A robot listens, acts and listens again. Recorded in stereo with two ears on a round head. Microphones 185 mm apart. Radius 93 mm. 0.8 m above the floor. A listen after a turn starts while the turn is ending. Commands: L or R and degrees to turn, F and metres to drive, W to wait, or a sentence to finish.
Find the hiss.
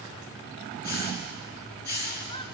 L45
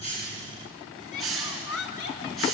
Facing the hiss, over 4 m away.